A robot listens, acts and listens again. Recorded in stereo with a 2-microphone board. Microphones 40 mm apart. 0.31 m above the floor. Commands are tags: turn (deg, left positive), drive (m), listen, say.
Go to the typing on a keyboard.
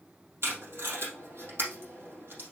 <listen/>
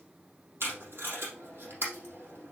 <listen/>
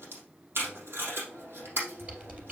<turn deg="-35"/>
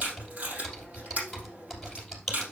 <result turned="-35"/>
<drive m="1.0"/>
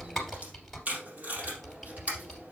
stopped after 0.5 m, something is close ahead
<say>Blocked. The typing on a keyboard is further on, straight ahead.</say>